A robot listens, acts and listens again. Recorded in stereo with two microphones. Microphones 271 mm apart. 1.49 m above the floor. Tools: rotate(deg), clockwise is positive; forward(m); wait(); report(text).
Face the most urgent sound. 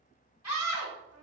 rotate(-90)
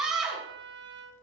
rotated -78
report("Found it: a scream, straight ahead, 2 to 4 m away.")